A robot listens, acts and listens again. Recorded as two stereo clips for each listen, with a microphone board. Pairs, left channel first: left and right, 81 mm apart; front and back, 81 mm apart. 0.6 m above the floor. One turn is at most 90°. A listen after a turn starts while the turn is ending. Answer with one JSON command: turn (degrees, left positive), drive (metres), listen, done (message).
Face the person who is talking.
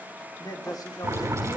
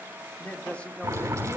{"turn": 70}
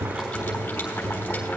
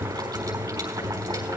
{"listen": true}
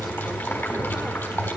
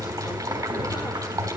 {"listen": true}
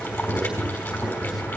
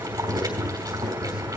{"done": "Facing where the man speaking came from. I can't hear it now."}